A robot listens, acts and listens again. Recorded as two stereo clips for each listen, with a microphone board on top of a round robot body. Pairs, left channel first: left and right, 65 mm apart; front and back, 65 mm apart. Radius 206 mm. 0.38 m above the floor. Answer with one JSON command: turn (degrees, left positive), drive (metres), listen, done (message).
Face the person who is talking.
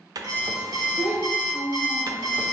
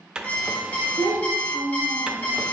{"turn": -175}
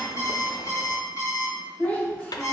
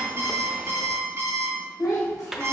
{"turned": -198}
{"turn": 25}
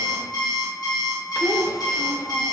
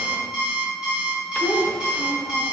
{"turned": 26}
{"listen": true}
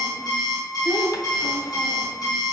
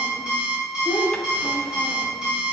{"listen": true}
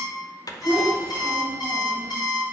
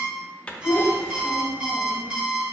{"done": "Facing the child speaking."}